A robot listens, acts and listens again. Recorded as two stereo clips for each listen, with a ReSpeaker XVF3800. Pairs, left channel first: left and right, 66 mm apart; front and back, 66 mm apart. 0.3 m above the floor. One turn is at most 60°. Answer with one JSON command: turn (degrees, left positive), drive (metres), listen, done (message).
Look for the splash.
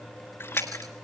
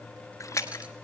{"turn": 35}
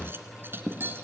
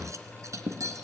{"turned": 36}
{"done": "I heard a splash from this way, but can't make it out now."}